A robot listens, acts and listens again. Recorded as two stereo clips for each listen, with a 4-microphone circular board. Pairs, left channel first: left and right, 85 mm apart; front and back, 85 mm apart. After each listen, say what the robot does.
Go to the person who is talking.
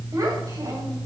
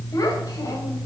Turn 45° right.
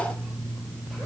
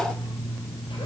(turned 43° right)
Keep listening.
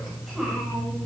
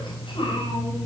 Drive 1.0 m forward.
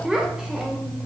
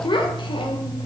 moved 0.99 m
Turn 10° right.
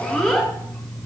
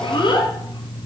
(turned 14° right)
Drive 1.0 m forward.
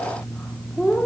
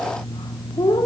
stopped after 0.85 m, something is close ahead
Turn 10° left.
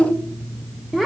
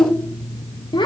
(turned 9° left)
Arrived at the child speaking, straight ahead.